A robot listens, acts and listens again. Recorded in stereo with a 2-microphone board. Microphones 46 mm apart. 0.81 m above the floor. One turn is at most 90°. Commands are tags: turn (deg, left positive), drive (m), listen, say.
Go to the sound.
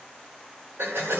<turn deg="-65"/>
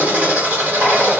<turn deg="-45"/>
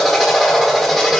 <drive m="1.0"/>
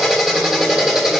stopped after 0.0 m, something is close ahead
<turn deg="-10"/>
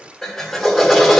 <say>Something is in my way. I am facing the drill but have not reached it.</say>